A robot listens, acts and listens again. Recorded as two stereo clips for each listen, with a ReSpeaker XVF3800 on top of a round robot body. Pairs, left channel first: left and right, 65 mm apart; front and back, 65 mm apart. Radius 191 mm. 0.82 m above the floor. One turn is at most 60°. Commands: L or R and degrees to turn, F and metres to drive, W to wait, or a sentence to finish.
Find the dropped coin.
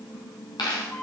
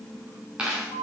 L60
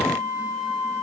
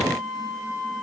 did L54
L50
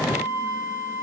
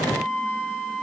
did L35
L15
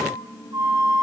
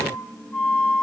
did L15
Facing where the dropped coin came from. I can't hear it now.